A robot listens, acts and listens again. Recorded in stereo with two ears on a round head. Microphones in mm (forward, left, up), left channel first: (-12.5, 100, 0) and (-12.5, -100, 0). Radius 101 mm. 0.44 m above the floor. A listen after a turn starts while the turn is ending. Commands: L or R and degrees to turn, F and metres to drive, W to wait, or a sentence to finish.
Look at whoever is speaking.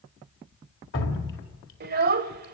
R45
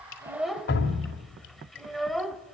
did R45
Facing the child speaking, under 1 m away.